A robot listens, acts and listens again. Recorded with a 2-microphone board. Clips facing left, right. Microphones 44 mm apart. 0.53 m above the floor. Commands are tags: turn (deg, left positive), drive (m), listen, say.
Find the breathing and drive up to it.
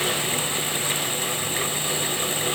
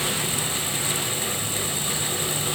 <listen/>
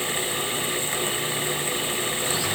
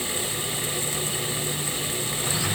<listen/>
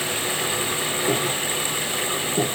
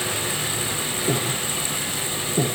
<turn deg="30"/>
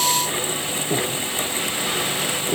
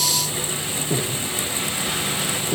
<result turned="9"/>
<turn deg="30"/>
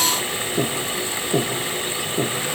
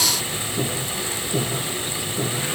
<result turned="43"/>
<turn deg="125"/>
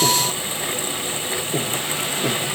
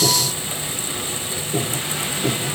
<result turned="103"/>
<turn deg="20"/>
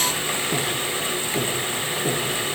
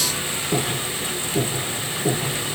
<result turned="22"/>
<drive m="1.0"/>
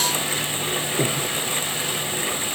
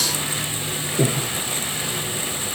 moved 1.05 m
<drive m="1.0"/>
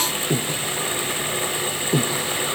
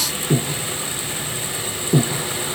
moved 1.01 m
<drive m="1.0"/>
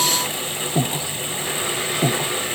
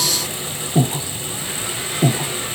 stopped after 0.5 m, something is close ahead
<say>Arrived at the breathing, straight ahead.</say>